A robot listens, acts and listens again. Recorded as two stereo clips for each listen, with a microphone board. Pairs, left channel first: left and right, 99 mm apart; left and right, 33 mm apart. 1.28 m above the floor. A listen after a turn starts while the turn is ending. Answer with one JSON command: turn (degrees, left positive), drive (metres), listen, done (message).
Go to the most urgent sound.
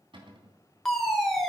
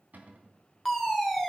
{"turn": 30}
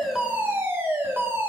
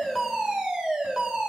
{"turn": -25}
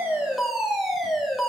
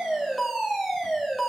{"drive": 1.0}
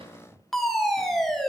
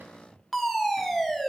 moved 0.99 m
{"drive": 1.0}
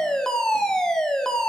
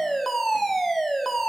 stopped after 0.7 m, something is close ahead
{"turn": 10}
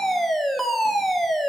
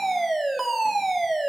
{"done": "Arrived at the fire alarm, straight ahead."}